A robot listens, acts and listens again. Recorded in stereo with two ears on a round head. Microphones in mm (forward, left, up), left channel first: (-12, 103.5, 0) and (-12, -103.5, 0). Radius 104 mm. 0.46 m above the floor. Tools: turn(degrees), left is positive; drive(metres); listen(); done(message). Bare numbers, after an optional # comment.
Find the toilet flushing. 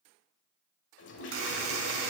# The toilet flushing: about 55° left or 125° left.
turn(55)
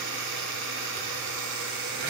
listen()
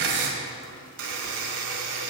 listen()
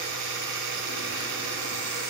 done("I heard a toilet flushing, but can't make it out now. It was about straight ahead or 70° left.")